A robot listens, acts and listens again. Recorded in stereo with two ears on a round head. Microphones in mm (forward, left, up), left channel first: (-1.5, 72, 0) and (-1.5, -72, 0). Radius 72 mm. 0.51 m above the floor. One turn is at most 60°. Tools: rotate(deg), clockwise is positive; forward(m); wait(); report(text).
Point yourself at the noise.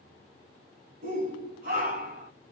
rotate(55)
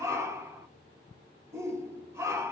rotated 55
rotate(20)
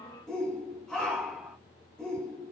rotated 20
report("Facing the shout, 2 to 4 m away.")